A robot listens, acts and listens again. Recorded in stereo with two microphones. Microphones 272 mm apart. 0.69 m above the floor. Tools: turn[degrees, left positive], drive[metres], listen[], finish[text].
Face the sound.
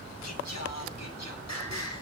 Thought: The singing: about 75° left or 105° left.
Action: turn[75]
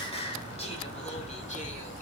Thought: So it is at 25° left.
Action: turn[25]
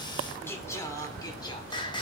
Thought: The singing is now 15° left.
Action: turn[15]
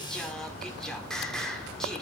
Action: finish[Found it: singing, straight ahead.]